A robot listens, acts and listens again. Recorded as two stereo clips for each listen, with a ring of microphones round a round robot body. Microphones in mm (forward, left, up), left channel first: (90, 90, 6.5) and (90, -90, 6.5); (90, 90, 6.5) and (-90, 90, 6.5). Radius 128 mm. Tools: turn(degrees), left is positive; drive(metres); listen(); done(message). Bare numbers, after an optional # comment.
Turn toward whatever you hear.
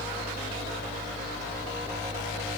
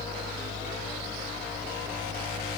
listen()
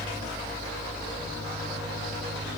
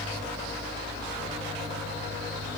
listen()
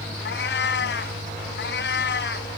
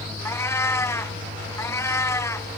# The cat meowing: 75° left.
turn(75)
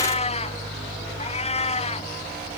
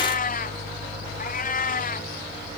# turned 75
# The cat meowing is now 35° left.
turn(35)
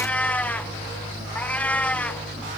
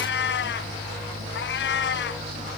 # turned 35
# The cat meowing is now 10° left.
turn(10)
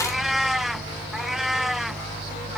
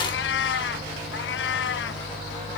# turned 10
done("Facing the cat meowing.")